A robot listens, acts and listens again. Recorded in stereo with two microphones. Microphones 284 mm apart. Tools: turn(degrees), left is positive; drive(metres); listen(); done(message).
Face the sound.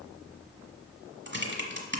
turn(degrees=-40)
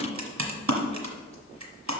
turn(degrees=-95)
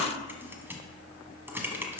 turn(degrees=-10)
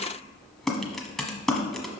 done("Facing the typing on a keyboard, 1 to 2 m away.")